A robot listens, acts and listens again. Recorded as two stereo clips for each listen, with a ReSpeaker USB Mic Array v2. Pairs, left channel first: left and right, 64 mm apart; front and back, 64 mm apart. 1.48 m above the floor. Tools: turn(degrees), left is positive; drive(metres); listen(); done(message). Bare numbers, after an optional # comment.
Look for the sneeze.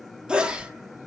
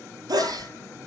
# The sneeze: 165° right.
turn(-165)
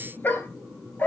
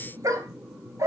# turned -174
# Nothing new. It was at 10° left.
turn(10)
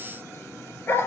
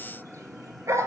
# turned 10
done("I heard a sneeze from this way, but can't make it out now.")